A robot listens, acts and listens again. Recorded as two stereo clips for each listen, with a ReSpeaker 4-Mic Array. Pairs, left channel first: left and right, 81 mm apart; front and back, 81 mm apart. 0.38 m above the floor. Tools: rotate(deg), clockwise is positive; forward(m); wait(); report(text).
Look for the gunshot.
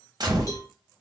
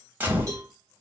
rotate(115)
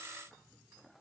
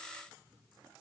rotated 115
report("Facing where the gunshot came from. I can't hear it now.")